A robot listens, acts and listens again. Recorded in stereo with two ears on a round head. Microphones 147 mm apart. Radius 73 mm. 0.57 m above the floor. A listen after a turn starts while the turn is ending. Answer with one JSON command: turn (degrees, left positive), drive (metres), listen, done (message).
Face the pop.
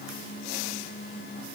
{"listen": true}
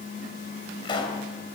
{"turn": 30}
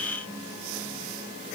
{"listen": true}
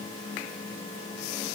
{"done": "I heard a pop, but can't make it out now. It was about straight ahead or 120° left."}